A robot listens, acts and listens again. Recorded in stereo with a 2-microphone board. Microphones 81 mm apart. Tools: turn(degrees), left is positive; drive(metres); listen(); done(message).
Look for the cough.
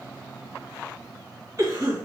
turn(degrees=-50)
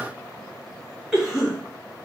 turn(degrees=-10)
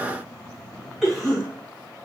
done("Found it: a cough, straight ahead, 2 to 4 m away.")